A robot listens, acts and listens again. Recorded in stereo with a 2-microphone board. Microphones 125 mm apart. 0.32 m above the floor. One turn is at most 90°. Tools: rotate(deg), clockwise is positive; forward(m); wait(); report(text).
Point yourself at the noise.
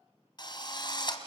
rotate(-40)
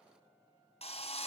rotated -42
rotate(-90)
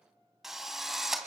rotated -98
report("Found it: a drill, straight ahead.")